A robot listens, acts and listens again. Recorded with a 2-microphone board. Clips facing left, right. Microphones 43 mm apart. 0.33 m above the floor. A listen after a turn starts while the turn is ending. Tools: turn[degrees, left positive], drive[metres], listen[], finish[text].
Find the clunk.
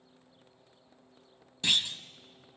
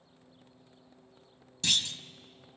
Thought: The clunk: about 20° left or 160° left.
Action: turn[20]
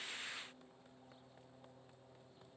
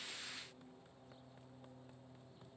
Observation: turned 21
Action: listen[]
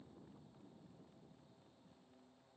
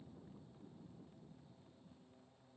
Action: finish[I heard a clunk, but can't make it out now. It was about straight ahead or 140° left.]